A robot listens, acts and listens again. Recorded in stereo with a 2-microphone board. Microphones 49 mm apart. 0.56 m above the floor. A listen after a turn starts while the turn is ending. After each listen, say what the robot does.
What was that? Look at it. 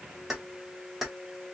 Turn 30° right.
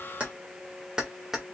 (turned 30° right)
Turn 30° right.
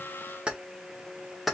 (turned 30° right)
Turn 30° right.
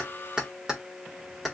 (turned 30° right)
Turn 30° left.
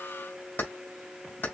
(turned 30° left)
Turn 140° left.
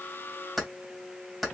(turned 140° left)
Found it: keys jangling, straight ahead.